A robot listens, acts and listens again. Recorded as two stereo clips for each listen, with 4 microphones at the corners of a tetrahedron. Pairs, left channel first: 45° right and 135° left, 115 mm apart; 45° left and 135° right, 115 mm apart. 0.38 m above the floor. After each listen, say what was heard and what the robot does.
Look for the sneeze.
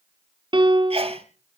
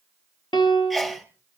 The sneeze: 130° left. Turn 130° left.
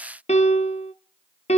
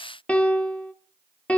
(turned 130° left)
I heard a sneeze from this way, but can't make it out now.